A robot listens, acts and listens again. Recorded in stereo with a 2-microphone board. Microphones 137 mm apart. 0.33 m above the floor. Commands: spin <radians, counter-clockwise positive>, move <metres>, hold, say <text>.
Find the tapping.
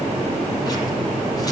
hold
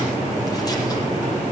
hold
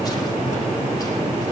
say I can't make out tapping to turn to.